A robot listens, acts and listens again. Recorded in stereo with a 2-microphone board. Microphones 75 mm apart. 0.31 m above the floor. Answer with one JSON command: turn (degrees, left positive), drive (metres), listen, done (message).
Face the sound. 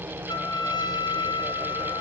{"turn": 90}
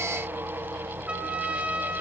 {"turn": -15}
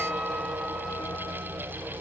{"listen": true}
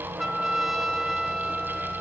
{"done": "Facing the trumpet."}